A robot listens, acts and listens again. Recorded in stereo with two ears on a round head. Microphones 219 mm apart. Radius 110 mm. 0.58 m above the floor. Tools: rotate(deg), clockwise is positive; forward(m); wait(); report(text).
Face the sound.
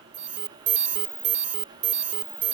rotate(30)
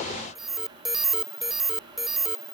report("Found it: an alarm, straight ahead.")